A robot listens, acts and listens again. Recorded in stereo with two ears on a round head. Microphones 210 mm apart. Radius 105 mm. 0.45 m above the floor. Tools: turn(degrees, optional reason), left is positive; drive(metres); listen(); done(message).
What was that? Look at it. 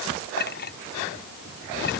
turn(degrees=45, reason="The clink: about 45° left or 135° left.")
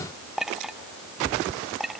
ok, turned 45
done("Found it: a clink, straight ahead.")